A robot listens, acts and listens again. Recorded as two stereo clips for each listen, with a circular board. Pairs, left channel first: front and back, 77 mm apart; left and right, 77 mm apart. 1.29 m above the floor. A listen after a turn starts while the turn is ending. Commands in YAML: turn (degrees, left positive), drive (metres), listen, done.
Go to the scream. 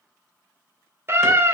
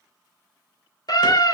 turn: 125
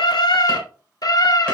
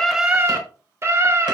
turn: -35
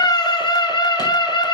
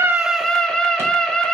turn: 10
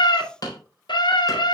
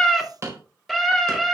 drive: 1.0
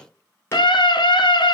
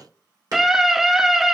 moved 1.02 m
drive: 1.0
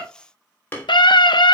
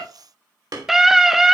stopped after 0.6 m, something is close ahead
done: "Arrived at the scream, straight ahead."